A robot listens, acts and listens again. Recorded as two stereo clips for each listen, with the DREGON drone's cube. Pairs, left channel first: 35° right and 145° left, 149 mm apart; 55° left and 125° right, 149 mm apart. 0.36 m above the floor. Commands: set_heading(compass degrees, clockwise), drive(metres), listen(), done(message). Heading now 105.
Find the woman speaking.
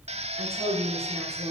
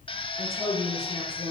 set_heading(320)
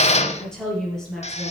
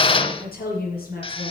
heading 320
set_heading(265)
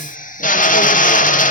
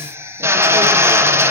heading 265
listen()
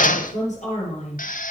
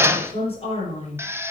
done("Found it: a woman speaking, straight ahead.")